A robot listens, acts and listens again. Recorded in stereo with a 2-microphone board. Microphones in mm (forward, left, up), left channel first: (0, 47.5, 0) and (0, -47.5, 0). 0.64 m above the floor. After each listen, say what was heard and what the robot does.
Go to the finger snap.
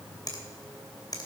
The finger snap: about 40° left or 140° left. Turn 40° left.
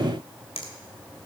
So it is at 95° left. Turn 95° left.
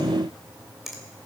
Drive 1.0 m forward.
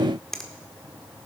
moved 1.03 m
Drive 1.0 m forward.
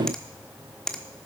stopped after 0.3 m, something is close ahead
The finger snap is now 10° left. Turn 10° left.
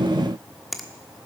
I am next to the finger snap.